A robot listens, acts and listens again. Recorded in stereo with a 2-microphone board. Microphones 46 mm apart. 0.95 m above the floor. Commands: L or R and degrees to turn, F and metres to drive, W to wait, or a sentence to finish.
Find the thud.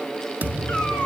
R40
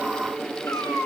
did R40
W
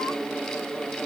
I heard a thud, but can't make it out now. It was about straight ahead or 100° right.